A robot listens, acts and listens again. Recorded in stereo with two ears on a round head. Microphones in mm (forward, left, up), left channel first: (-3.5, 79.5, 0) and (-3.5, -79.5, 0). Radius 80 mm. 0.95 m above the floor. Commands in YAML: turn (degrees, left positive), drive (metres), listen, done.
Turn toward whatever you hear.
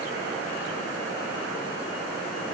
listen: true
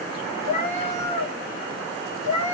turn: 15
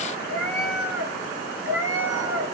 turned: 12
turn: -15
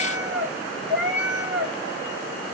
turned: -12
done: "Found it: a cat meowing, straight ahead."